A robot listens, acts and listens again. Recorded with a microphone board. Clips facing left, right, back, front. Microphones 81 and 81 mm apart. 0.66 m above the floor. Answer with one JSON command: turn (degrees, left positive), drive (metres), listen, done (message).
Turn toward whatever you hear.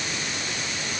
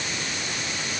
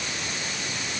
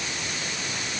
{"listen": true}
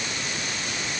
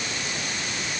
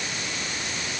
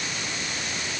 {"listen": true}
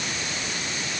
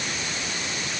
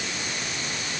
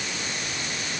{"done": "I can't make out anything to turn to."}